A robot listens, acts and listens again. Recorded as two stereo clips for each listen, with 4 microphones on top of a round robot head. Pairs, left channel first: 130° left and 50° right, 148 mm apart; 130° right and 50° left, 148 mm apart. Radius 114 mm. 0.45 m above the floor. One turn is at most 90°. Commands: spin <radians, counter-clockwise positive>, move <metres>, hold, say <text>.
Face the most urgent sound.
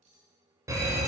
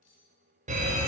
spin 0.35
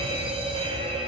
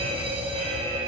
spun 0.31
say Found it: a fire alarm, straight ahead, 2 to 4 m away.